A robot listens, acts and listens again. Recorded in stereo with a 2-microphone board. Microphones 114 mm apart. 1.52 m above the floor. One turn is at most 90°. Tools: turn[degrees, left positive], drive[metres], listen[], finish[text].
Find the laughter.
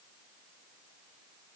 Action: listen[]
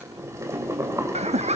Thought: The laughter: about 70° right or 110° right.
Action: turn[-70]
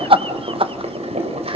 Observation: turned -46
Thought: So it is at 55° right.
Action: turn[-55]
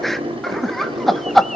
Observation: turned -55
Action: finish[Facing the laughter, 1 to 2 m away.]